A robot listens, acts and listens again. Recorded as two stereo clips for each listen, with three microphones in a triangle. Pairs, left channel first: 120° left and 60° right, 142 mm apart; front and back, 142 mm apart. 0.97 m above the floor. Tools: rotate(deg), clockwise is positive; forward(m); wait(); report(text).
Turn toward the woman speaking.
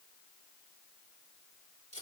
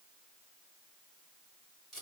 wait()
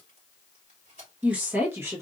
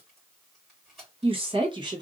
rotate(125)
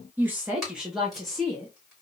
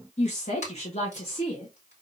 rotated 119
rotate(-35)
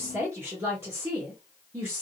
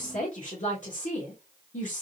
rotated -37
rotate(-10)
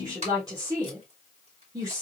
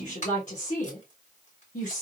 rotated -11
report("Facing the woman speaking.")